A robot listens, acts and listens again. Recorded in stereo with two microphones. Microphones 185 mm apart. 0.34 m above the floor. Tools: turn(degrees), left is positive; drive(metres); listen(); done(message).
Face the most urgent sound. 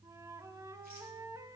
listen()
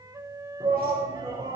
turn(degrees=-25)
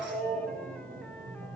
turn(degrees=-130)
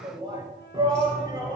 turn(degrees=-25)
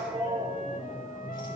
done("Facing the shout.")